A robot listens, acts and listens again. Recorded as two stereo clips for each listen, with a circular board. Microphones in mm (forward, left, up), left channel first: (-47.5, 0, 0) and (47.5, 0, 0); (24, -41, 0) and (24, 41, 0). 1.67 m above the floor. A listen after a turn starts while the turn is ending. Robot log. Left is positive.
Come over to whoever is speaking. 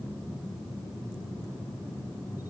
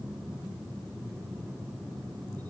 cmd idle
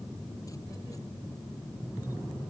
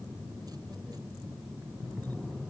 cmd idle
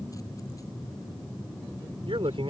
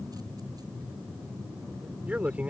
note: The man speaking: 15° left.
cmd yaw +15
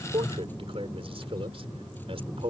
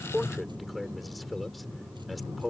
cmd fwd 1.0
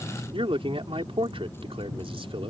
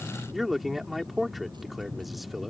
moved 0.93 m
cmd fwd 1.0
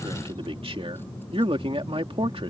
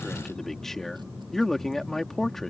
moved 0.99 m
cmd fwd 1.0
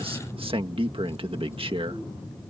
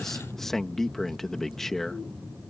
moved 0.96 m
cmd fwd 1.0
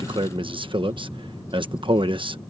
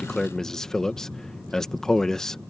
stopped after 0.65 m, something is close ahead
note: The man speaking is now 10° right.
cmd yaw -10
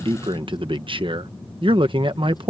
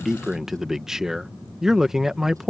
end: Arrived at the man speaking, straight ahead.